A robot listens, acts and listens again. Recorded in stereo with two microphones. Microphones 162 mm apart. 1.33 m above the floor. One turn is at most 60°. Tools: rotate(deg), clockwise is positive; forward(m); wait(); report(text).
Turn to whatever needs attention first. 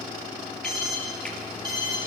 rotate(-60)
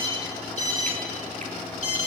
rotate(-50)
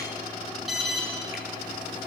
report("Found it: an alarm, straight ahead, over 4 m away.")